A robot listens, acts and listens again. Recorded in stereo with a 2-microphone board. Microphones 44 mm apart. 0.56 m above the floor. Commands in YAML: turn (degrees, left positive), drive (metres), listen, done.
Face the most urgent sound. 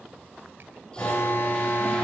turn: 60
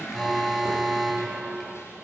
done: "Facing the alarm, over 4 m away."